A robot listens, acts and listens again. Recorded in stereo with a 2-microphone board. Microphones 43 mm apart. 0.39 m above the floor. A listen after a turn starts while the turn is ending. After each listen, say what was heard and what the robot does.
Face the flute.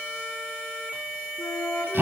The flute: about 70° left or 110° left. Turn 70° left.
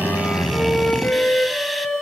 So it is at 40° left. Turn 40° left.
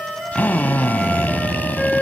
The flute is now 10° right. Turn 10° right.
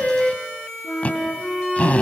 Found it: a flute, straight ahead.